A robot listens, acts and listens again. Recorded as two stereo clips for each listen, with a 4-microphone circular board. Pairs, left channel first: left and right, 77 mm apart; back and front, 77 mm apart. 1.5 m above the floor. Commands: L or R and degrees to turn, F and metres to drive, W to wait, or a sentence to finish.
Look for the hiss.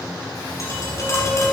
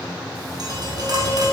W
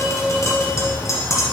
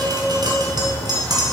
W
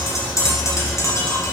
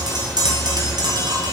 I can't make out a hiss to turn to.